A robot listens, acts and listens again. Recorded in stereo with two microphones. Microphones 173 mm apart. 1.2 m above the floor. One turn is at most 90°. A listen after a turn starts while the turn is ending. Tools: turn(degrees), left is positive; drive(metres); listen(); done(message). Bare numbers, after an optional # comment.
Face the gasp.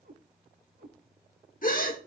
# The gasp: about 55° left or 125° left.
turn(55)
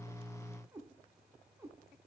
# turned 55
listen()
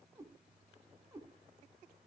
done("I heard a gasp, but can't make it out now. It was about straight ahead or 70° left.")